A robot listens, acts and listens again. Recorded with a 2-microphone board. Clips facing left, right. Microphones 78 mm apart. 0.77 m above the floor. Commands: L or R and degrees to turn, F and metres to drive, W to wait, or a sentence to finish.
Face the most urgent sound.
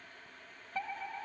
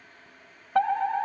R65
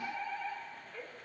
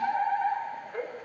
R50
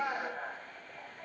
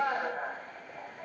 R20
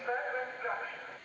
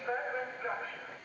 Facing the fire alarm.